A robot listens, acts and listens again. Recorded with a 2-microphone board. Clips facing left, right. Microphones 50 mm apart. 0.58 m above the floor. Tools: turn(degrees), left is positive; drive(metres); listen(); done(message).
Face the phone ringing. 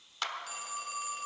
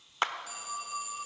turn(degrees=50)
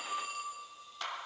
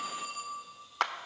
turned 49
done("Found it: a phone ringing, straight ahead.")